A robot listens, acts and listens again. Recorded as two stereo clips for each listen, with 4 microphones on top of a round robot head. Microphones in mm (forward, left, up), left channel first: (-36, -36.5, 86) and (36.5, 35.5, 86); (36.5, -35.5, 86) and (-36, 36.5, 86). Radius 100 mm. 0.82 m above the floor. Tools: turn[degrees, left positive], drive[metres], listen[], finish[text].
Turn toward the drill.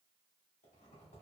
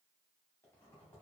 Action: listen[]
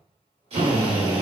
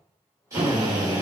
Thought: The drill: 75° left.
Action: turn[75]
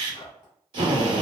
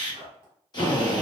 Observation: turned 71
Action: finish[Found it: a drill, straight ahead.]